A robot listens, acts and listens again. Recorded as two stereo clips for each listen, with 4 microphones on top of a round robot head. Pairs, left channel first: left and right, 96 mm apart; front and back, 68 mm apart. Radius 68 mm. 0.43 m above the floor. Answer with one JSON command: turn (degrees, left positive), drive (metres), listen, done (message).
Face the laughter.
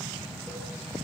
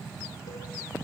{"listen": true}
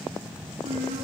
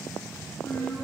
{"turn": -70}
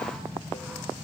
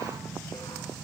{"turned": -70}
{"listen": true}
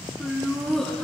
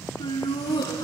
{"done": "Facing the laughter."}